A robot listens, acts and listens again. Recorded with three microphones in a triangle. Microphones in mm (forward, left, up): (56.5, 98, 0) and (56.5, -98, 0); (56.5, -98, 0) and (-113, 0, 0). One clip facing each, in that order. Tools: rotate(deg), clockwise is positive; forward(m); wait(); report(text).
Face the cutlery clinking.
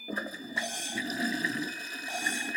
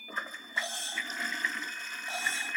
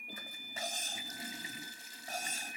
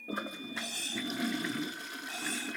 rotate(-15)
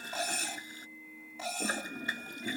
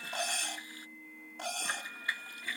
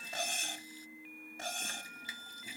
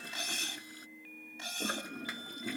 report("Found it: cutlery clinking, straight ahead.")